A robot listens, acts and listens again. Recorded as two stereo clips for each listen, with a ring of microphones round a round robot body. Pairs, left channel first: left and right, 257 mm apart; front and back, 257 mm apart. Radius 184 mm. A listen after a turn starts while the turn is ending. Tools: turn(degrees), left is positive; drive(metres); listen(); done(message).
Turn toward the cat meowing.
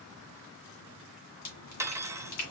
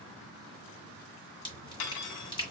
listen()
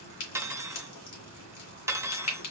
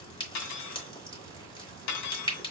listen()
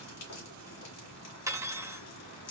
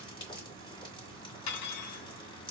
done("I can't make out a cat meowing to turn to.")